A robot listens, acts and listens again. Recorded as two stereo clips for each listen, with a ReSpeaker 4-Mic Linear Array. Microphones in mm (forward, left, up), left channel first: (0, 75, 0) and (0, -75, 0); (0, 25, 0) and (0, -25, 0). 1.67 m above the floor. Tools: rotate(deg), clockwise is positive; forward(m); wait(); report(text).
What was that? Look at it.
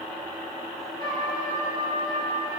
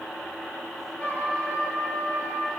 rotate(-35)
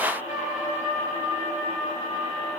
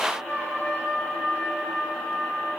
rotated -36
rotate(-105)
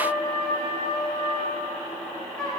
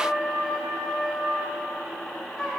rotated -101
report("Facing the trumpet.")